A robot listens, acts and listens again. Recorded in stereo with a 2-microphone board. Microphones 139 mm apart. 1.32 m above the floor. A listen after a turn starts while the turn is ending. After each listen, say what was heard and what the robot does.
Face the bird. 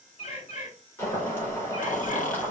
The bird: about 50° left or 130° left. Turn 50° left.
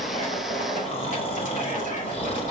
Keep listening.
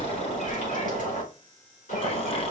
Keep listening.
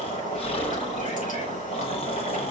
I heard a bird, but can't make it out now. It was about straight ahead or 80° left.